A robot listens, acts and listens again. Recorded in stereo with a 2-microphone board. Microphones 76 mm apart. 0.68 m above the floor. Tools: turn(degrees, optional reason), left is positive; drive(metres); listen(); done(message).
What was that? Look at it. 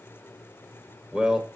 turn(degrees=-30)
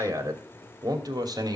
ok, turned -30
turn(degrees=-120, reason="So it is at 120° right.")
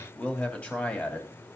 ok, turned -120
turn(degrees=20, reason="The man speaking is now 20° left.")
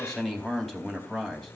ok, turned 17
done("Found it: a man speaking, straight ahead, 2 to 4 m away.")